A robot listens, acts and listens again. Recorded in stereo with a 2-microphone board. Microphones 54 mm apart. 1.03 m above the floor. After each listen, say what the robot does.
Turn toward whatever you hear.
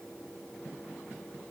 Keep listening.
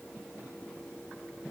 Keep listening.
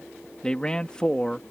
Turn 15° left.
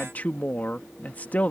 Turn 145° left.
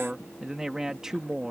Turn 10° right.
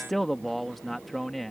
Facing the man speaking.